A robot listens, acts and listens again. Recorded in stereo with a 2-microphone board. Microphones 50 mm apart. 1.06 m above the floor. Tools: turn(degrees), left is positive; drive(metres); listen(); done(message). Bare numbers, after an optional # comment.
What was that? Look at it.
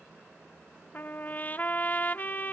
# The trumpet: about 35° left or 145° left.
turn(35)
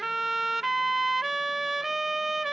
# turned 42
done("Facing the trumpet.")